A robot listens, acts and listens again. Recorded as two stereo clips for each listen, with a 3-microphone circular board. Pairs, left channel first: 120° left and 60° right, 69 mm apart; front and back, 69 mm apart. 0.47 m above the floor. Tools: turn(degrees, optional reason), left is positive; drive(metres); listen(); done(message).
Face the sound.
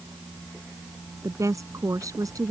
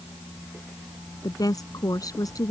turn(degrees=-30, reason="The woman speaking: 30° right.")
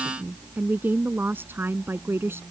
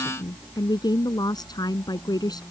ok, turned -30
done("Found it: a woman speaking, straight ahead.")